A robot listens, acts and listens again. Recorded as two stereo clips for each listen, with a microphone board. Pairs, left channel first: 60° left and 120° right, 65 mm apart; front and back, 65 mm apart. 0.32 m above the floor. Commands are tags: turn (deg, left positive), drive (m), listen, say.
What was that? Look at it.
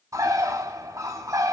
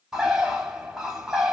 <turn deg="-100"/>
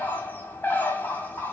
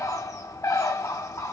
<say>Found it: a bird, straight ahead, 1 to 2 m away.</say>